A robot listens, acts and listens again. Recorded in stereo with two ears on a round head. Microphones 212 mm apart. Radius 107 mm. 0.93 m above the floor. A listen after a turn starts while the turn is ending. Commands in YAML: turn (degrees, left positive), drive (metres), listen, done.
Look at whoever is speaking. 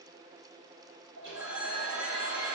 listen: true
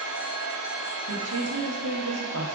turn: -65
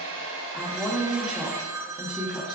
done: "Facing the woman speaking."